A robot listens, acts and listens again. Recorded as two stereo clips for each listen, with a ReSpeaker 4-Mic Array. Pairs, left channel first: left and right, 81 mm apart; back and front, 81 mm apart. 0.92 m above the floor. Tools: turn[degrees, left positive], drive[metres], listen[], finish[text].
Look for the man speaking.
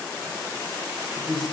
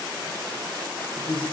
Thought: The man speaking: 175° left.
Action: turn[175]
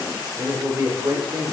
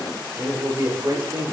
Thought: The man speaking is now 50° right.
Action: turn[-50]
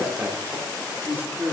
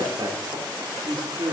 Thought: The man speaking is now 25° right.
Action: turn[-25]
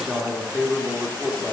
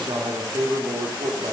Thought: The man speaking is now 10° right.
Action: turn[-10]
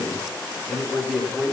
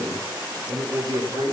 Action: finish[Found it: a man speaking, straight ahead.]